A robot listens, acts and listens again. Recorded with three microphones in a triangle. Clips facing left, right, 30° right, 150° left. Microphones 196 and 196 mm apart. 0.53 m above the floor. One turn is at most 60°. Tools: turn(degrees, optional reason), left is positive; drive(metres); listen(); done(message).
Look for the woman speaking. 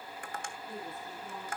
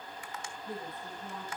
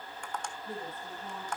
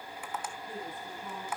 turn(degrees=-60, reason="The woman speaking: 80° right.")
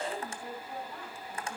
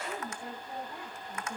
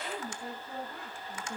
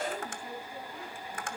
turn(degrees=-20, reason="The woman speaking is now 20° right.")
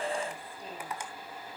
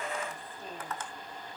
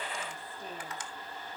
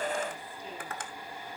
listen()
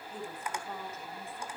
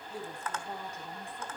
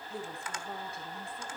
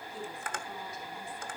turn(degrees=-15, reason="The woman speaking is now 15° right.")
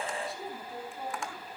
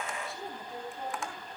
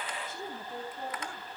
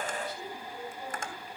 done("Facing the woman speaking, 2 to 4 m away.")